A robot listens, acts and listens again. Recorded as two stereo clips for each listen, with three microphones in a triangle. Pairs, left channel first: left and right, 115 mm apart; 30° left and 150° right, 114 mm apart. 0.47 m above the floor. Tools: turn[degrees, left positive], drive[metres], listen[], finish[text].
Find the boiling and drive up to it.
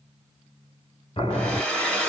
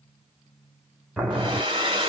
Thought: The boiling: 130° left.
Action: turn[130]
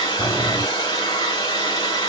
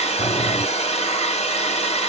Action: listen[]
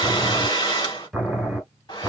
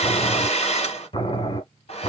Action: drive[1.0]
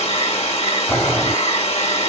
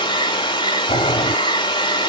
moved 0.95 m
Thought: The boiling is now 10° left.
Action: turn[10]
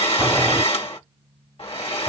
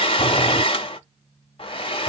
Action: listen[]
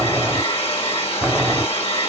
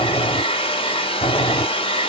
Action: drive[1.0]
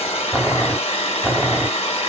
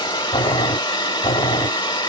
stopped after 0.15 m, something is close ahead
Action: finish[I am next to the boiling.]